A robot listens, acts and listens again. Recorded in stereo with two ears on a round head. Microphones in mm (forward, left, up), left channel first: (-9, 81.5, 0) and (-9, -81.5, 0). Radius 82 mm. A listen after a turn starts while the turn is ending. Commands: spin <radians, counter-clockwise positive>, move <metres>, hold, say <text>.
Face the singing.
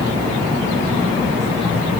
hold
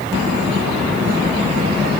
hold
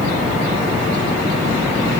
say I can't make out singing.